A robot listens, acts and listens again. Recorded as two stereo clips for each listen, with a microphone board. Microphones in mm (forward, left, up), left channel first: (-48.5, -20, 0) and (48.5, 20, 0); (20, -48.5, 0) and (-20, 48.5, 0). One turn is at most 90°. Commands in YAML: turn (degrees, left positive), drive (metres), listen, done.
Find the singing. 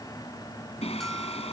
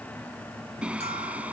turn: -90
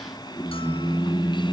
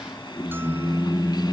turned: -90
turn: -90
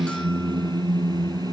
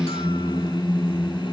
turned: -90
turn: -25
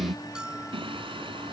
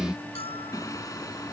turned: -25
turn: -10
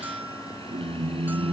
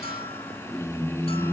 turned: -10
done: "Facing the singing."